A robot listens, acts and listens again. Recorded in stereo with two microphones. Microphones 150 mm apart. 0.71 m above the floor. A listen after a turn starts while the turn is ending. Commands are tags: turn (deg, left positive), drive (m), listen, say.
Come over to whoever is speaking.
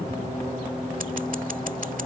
<listen/>
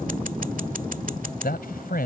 <turn deg="90"/>
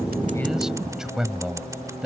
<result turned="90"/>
<drive m="1.0"/>
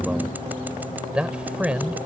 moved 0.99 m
<drive m="1.0"/>
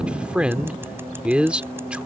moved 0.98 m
<turn deg="-10"/>
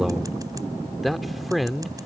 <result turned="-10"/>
<drive m="1.0"/>
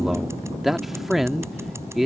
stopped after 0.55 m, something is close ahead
<say>I am next to the man speaking.</say>